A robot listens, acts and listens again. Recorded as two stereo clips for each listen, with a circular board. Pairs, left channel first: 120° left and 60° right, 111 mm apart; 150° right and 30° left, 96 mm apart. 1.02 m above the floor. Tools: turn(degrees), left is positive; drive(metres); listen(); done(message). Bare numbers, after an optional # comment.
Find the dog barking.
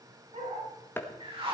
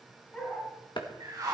# The dog barking: 70° right.
turn(-70)
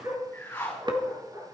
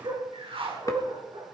done("Found it: a dog barking, straight ahead.")